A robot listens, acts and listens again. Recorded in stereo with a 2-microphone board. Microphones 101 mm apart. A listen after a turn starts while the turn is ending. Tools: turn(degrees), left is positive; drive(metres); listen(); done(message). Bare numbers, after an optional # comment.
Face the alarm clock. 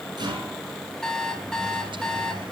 turn(30)
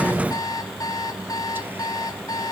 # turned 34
# So it is at 140° left.
turn(140)
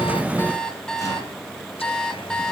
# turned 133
# The alarm clock is now 10° left.
turn(10)
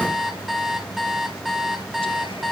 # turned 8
done("Found it: an alarm clock, straight ahead.")